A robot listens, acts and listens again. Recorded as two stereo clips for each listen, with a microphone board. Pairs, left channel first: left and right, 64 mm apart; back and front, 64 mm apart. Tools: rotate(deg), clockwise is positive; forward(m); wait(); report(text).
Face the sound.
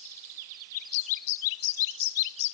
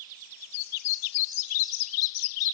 wait()
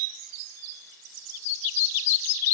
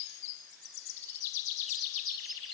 wait()
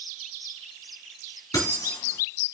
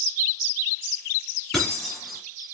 rotate(-90)
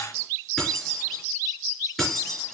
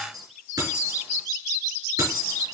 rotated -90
report("Found it: keys jangling, straight ahead, over 4 m away.")